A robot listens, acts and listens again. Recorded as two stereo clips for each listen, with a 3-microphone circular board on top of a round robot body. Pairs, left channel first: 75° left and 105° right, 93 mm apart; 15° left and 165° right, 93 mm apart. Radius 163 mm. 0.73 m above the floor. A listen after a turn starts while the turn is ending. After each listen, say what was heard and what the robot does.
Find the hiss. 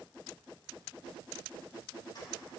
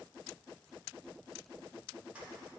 Keep listening.
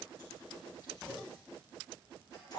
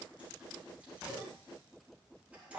Keep listening.
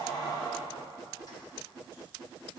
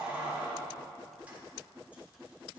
I can't make out a hiss to turn to.